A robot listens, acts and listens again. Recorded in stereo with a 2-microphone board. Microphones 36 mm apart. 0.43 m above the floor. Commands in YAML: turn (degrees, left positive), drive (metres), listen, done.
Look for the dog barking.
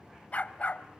turn: 45
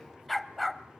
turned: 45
done: "Found it: a dog barking, straight ahead, under 1 m away."